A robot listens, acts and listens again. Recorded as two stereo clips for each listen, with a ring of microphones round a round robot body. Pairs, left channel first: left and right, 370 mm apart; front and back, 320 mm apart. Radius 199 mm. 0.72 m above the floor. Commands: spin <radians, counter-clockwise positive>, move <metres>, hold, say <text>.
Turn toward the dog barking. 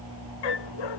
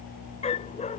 spin 1.22
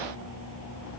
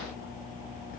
hold
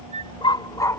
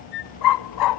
say Facing the dog barking.